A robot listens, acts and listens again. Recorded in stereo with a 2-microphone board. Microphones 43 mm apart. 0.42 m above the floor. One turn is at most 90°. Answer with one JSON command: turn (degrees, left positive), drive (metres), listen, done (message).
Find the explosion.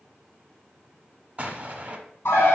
{"turn": -35}
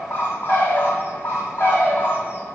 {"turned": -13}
{"listen": true}
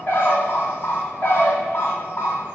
{"done": "I heard an explosion, but can't make it out now. It was about 20° right or 135° right."}